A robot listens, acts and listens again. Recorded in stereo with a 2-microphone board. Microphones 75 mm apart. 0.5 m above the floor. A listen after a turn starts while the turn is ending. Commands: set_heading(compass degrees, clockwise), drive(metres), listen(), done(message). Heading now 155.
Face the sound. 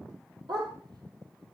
set_heading(225)
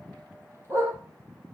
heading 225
set_heading(260)
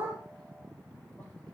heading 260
listen()
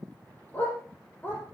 set_heading(235)
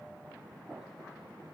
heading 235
listen()
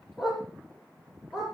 done("Facing the dog barking.")